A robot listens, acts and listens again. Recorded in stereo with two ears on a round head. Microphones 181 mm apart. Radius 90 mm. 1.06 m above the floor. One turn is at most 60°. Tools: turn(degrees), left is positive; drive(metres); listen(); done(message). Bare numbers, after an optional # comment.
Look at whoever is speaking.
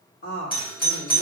# The woman speaking: about 65° left or 115° left.
turn(60)
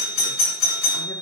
listen()
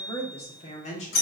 # So it is at 40° left.
turn(40)
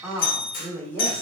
# The woman speaking is now 10° left.
turn(10)
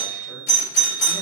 listen()
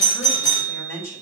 # The woman speaking is now 10° left.
turn(10)
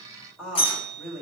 done("Facing the woman speaking.")